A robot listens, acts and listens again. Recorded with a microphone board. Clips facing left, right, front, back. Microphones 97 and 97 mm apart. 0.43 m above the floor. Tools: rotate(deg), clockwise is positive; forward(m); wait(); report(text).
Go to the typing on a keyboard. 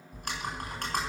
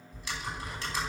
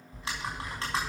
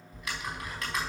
rotate(-60)
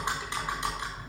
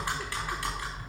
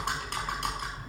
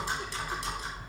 rotate(-20)
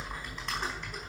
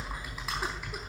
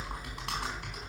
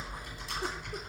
forward(1.0)
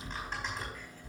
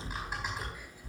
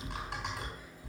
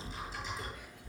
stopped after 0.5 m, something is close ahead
rotate(10)
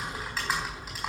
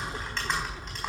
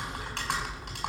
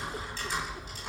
report("Something is in my way. I am facing the typing on a keyboard but have not reached it.")